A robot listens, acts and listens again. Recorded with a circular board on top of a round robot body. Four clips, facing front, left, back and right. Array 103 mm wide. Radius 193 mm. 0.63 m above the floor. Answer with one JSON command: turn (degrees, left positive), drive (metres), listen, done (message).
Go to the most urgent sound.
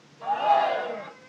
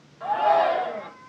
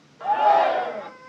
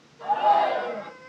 {"turn": 175}
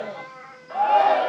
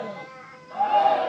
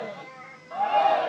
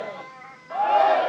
{"turn": -30}
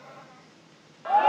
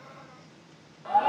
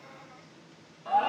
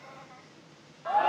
{"drive": 1.0}
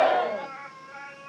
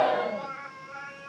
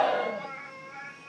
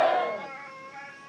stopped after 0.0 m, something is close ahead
{"done": "Blocked. The shout is further on, straight ahead."}